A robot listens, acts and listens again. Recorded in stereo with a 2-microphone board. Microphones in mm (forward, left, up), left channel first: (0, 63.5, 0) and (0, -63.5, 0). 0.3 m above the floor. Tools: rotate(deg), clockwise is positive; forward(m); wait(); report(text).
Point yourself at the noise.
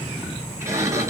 rotate(25)
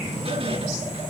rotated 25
wait()
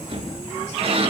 rotate(130)
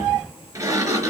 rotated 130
rotate(25)
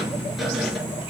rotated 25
wait()
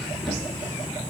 wait()
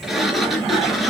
report("Found it: a sliding door, straight ahead, 2 to 4 m away.")